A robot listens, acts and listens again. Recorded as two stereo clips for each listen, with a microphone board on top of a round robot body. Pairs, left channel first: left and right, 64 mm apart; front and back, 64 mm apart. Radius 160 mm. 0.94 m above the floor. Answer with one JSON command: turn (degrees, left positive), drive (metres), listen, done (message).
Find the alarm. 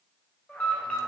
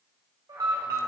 {"turn": 165}
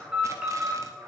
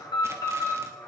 {"turn": -10}
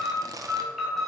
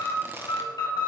{"done": "Found it: an alarm, straight ahead, 2 to 4 m away."}